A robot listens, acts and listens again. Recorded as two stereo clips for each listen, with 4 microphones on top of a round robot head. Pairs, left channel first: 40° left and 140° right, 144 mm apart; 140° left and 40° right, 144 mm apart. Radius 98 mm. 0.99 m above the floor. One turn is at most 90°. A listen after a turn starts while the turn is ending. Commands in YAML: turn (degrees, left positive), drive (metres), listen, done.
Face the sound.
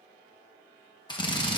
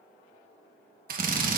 turn: -20
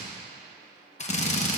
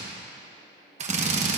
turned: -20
done: "Found it: a drill, straight ahead."